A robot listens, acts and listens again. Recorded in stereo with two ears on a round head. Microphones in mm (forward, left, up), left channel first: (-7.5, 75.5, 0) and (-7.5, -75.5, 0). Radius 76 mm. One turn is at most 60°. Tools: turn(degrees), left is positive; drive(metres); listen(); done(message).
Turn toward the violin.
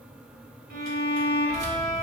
turn(degrees=-60)
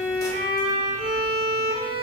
turn(degrees=-45)
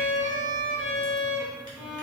done("Facing the violin.")